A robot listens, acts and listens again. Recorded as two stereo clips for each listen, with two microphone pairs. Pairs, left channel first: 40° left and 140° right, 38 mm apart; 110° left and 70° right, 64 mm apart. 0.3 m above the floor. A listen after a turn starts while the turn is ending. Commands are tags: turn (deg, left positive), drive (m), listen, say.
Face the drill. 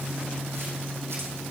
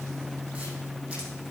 <listen/>
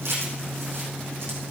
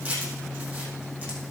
<listen/>
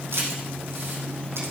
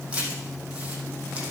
<say>I can't make out a drill to turn to.</say>